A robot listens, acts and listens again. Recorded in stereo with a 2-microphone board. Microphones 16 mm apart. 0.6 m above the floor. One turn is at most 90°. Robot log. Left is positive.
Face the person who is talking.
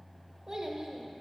note: The child speaking: about 45° right or 135° right.
cmd yaw -45
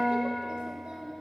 note: So it is at 90° right.
cmd yaw -90
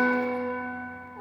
cmd idle
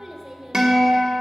note: The child speaking is now 25° right.
cmd yaw -25
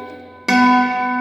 cmd idle
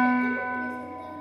cmd idle
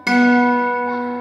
end: Facing where the child speaking came from. I can't hear it now.